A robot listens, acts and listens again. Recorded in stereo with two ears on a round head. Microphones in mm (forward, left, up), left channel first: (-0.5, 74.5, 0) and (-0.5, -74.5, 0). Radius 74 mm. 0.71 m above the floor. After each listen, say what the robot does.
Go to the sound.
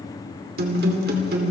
Turn 65° right.
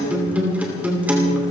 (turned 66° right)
Turn 10° right.
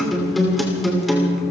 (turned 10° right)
Drive 1.0 m forward.
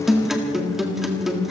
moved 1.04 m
Drive 1.0 m forward.
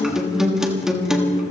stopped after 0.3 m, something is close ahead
I am next to the guitar.